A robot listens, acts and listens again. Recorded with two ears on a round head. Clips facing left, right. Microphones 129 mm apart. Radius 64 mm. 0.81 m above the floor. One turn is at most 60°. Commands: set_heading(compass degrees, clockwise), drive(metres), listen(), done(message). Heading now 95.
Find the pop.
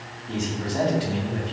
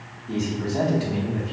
listen()
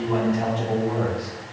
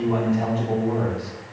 listen()
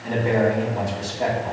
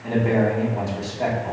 done("I can't make out a pop to turn to.")